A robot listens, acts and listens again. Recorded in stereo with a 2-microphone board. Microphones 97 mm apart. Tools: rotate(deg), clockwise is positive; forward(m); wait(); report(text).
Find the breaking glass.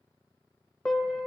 wait()
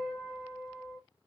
wait()
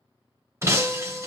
rotate(30)
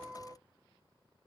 wait()
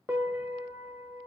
report("I heard breaking glass, but can't make it out now. It was about straight ahead or 120° right.")